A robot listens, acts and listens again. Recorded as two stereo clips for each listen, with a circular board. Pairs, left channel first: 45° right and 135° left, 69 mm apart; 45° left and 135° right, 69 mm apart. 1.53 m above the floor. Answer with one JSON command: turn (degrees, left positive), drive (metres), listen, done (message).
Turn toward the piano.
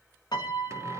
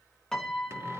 {"turn": -40}
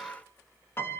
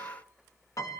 {"turn": 10}
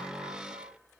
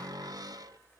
{"listen": true}
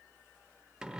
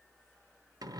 {"listen": true}
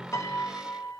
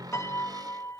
{"done": "Facing the piano."}